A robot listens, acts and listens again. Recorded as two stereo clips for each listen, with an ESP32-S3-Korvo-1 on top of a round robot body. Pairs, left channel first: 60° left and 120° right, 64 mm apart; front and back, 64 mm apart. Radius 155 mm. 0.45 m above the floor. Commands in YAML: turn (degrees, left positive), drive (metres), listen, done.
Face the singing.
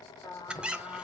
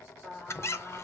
turn: 80
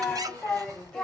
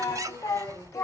turn: -20
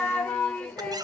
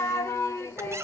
done: "Facing the singing, 1 to 2 m away."